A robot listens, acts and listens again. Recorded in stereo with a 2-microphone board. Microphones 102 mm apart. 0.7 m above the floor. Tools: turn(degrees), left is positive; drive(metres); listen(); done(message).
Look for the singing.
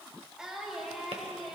turn(degrees=30)
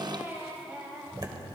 turn(degrees=-15)
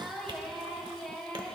turn(degrees=10)
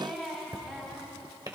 done("Found it: singing, straight ahead.")